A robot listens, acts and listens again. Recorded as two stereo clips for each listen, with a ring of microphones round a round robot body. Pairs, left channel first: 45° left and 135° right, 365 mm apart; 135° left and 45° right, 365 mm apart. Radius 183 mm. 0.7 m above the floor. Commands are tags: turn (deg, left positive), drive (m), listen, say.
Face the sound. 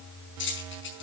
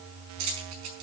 <turn deg="-15"/>
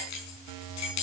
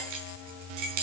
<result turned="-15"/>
<say>Found it: keys jangling, straight ahead, over 4 m away.</say>